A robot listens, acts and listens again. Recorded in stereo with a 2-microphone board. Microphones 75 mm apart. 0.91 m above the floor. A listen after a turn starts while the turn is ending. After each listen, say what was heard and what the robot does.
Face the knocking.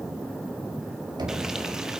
The knocking: about 70° right or 110° right. Turn 70° right.
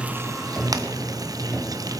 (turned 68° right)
Keep listening.
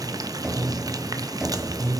So it is at 10° right. Turn 10° right.
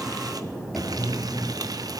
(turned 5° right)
Found it: knocking, straight ahead.